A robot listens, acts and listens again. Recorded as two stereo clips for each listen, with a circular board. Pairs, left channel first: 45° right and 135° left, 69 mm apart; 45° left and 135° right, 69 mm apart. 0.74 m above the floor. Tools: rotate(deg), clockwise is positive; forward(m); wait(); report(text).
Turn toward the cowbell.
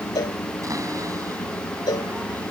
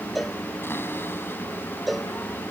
rotate(45)
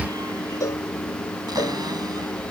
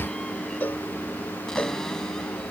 wait()
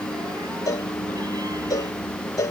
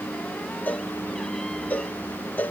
rotate(15)
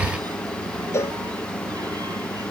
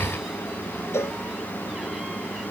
report("Facing the cowbell.")